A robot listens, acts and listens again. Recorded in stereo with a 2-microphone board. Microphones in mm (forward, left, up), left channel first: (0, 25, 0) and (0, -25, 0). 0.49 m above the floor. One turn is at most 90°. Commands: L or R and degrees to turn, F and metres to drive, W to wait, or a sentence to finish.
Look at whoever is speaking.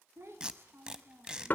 R60
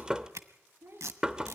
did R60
R60
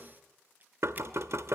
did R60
W
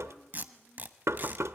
W
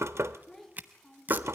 Facing the child speaking, 2 to 4 m away.